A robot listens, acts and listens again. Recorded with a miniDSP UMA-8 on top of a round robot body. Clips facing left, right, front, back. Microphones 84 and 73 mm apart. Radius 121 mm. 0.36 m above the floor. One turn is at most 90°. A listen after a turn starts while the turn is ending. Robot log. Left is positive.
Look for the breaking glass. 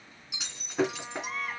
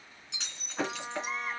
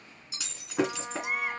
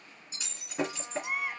note: The breaking glass: 10° left.
cmd yaw +10
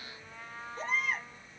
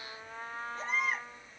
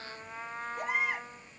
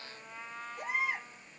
end: Facing where the breaking glass came from. I can't hear it now.